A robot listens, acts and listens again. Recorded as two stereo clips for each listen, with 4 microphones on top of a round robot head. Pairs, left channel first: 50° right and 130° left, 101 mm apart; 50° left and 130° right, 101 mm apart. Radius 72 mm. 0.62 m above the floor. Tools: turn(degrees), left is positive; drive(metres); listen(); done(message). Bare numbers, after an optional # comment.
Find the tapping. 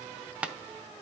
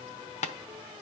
# The tapping: 55° left.
turn(55)
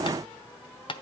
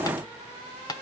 done("Facing the tapping.")